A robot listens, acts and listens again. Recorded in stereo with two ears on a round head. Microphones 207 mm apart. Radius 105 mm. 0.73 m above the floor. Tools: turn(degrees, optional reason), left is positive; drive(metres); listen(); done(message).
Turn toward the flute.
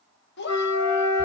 turn(degrees=30)
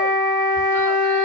turn(degrees=135, reason="So it is at 135° left.")
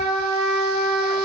done("Facing the flute.")